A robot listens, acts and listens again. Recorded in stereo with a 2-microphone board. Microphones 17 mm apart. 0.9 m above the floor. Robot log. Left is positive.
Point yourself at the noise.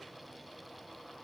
cmd idle
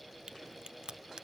note: The crack: about 65° right or 115° right.
cmd yaw -65
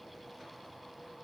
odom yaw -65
cmd idle
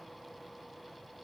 end: I heard a crack, but can't make it out now. It was about straight ahead or 50° right.